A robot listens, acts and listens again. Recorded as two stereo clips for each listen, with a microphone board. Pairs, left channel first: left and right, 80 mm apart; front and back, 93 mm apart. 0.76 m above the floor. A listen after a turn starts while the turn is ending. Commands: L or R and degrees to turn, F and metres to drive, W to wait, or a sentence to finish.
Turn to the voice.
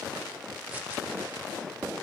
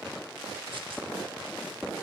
W
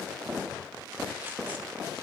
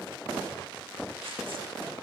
W
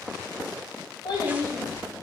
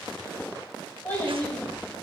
L70
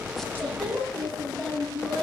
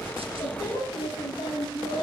Facing the child speaking.